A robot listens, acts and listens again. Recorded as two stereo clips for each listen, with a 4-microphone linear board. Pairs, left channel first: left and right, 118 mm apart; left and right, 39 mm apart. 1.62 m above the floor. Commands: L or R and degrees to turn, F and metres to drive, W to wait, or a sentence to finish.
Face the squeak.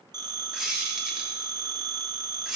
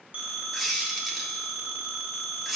R30
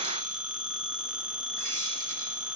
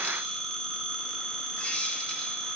W
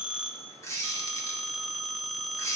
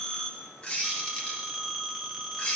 L25
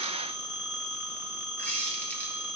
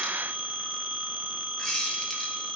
L15
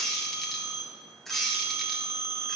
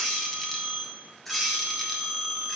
Facing the squeak.